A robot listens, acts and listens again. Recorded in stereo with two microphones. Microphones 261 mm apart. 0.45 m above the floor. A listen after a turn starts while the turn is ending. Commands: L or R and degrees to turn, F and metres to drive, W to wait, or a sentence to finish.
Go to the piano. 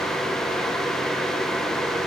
W
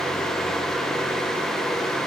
W
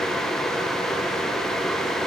I can't make out a piano to turn to.